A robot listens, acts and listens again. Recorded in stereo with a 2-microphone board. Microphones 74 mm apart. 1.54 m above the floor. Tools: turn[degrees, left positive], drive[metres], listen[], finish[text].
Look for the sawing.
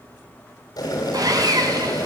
Thought: The sawing: about 60° right or 120° right.
Action: turn[-60]
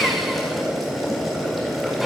Action: finish[Facing the sawing.]